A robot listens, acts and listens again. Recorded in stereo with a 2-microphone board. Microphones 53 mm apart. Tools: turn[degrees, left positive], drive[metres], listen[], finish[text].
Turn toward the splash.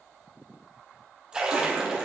Thought: The splash: about 15° right or 165° right.
Action: turn[-15]
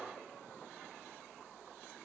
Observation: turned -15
Action: listen[]
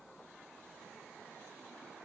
Action: finish[I heard a splash, but can't make it out now. It was about straight ahead or 150° right.]